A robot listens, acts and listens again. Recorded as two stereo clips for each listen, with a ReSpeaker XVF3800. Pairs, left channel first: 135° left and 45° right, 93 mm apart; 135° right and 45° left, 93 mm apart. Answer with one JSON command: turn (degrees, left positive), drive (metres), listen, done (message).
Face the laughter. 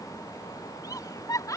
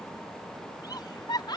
{"turn": -175}
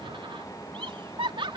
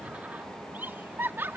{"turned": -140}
{"turn": -20}
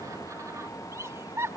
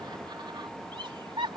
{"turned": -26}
{"turn": 15}
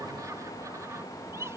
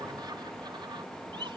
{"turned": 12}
{"turn": 15}
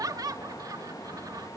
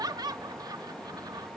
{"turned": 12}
{"done": "Found it: laughter, straight ahead."}